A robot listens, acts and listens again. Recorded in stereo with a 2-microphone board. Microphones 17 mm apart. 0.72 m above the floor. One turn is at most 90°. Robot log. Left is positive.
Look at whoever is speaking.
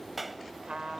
cmd idle
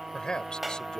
note: The man speaking: about 50° left or 130° left.
cmd yaw +50
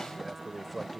end: Facing the man speaking.